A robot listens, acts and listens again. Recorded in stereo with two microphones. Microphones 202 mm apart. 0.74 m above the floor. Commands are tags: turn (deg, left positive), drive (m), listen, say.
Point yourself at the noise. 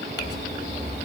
<turn deg="55"/>
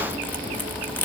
<turn deg="10"/>
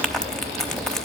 <say>Facing the crumpling.</say>